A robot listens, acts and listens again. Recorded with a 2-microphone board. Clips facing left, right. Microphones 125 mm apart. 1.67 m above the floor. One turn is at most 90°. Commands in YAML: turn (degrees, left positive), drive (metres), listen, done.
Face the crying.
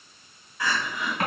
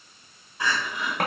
turn: -25
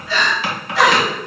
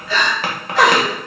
turn: -90
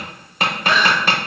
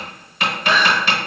turn: -40
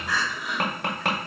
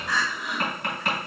done: "Found it: crying, straight ahead."